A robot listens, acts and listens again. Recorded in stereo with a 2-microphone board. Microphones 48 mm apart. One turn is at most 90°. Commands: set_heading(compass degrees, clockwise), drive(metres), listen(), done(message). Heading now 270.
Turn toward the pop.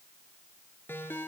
listen()
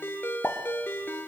set_heading(235)
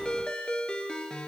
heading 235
listen()
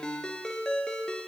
done("I heard a pop, but can't make it out now. It was about straight ahead or 110° left.")